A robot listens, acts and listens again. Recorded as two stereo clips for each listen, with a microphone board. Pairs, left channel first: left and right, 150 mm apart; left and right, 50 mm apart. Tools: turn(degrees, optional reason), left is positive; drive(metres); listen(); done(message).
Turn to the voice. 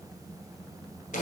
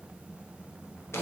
listen()
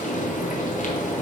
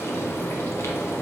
listen()
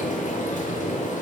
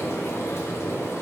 done("I can't make out anyone speaking to turn to.")